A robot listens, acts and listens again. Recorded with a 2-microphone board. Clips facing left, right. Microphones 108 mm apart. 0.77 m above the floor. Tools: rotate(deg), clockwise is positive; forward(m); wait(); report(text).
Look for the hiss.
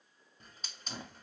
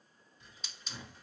rotate(-50)
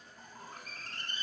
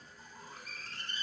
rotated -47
rotate(-75)
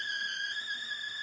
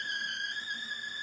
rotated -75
report("Found it: a hiss, straight ahead.")